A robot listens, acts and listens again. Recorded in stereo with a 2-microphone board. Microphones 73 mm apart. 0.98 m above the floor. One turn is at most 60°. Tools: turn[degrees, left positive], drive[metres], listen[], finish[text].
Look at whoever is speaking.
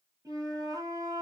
Action: listen[]
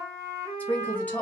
Thought: The woman speaking: about 20° left or 160° left.
Action: turn[20]
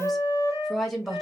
Action: finish[Facing the woman speaking, 1 to 2 m away.]